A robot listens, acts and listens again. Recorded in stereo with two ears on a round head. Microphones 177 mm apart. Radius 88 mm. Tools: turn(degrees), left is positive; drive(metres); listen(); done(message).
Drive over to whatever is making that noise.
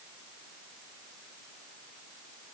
listen()
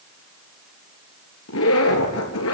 turn(degrees=90)
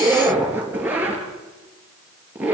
turn(degrees=-10)
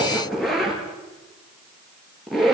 drive(metres=1.0)
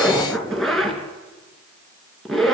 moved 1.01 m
drive(metres=1.0)
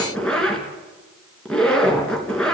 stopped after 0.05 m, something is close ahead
done("Something is in my way. I am facing the zipper but have not reached it.")